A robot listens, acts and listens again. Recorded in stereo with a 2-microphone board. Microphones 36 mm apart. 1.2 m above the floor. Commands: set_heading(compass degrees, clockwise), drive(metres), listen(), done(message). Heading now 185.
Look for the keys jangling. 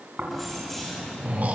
set_heading(155)
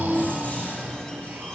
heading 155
listen()
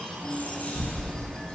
set_heading(20)
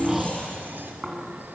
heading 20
listen()
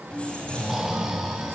set_heading(345)
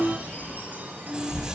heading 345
set_heading(0)
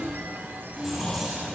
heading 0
done("Found it: keys jangling, straight ahead.")